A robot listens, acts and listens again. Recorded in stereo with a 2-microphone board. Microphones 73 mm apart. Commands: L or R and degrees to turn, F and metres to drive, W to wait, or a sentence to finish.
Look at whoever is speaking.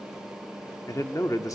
L50
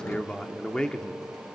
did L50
L10
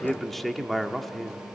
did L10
Facing the man speaking.